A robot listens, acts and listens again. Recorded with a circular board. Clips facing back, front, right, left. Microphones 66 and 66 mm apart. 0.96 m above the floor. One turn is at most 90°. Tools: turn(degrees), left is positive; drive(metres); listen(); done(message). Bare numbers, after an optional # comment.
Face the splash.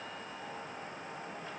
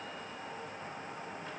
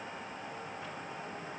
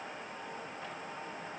listen()
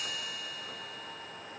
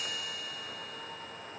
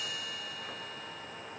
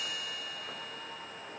listen()
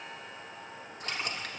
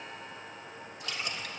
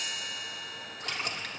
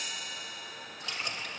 # The splash: 130° right.
turn(-90)
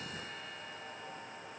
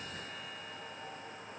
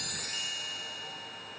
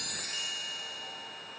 # Nothing new. It was at 40° right.
turn(-40)
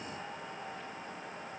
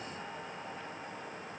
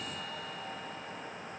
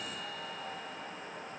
done("Facing where the splash came from. I can't hear it now.")